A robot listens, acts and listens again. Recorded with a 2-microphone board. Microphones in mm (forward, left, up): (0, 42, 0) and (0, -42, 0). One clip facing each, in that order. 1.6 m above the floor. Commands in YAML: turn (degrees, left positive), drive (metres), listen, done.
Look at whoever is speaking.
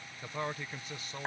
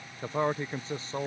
turn: -30
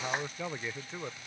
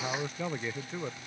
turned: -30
done: "Facing the man speaking."